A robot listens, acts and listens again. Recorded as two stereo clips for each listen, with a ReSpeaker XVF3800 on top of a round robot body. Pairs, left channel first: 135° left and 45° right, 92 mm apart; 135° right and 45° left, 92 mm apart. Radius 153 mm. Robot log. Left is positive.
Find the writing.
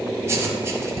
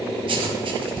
note: The writing: 20° left.
cmd yaw +20
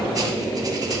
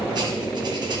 cmd idle
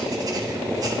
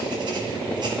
cmd idle
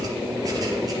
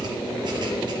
end: Found it: writing, straight ahead, 1 to 2 m away.